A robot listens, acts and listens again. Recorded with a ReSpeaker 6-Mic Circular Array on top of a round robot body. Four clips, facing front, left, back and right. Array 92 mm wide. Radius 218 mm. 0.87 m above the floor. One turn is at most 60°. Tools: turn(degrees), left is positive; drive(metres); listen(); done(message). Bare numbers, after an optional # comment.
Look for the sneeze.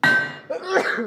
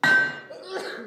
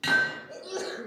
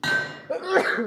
# The sneeze: 40° right.
turn(-40)
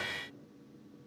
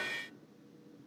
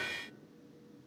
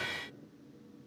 done("Facing where the sneeze came from. I can't hear it now.")